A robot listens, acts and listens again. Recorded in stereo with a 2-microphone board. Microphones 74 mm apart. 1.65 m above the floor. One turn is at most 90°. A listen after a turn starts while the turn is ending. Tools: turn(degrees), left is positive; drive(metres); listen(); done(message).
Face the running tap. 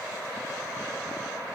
listen()
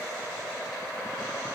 listen()
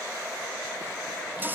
turn(degrees=-25)
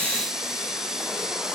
done("Found it: a running tap, straight ahead.")